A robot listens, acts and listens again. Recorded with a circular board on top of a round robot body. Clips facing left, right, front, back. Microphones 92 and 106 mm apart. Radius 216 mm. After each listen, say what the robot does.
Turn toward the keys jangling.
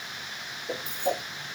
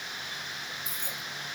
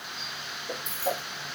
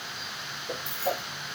Turn 45° right.
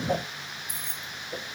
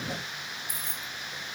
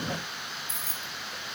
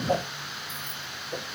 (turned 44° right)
Turn 15° right.
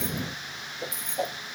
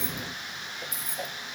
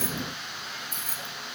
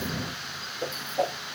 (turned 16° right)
Turn 10° right.
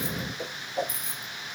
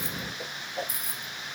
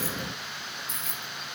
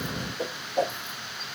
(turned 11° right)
Found it: keys jangling, straight ahead.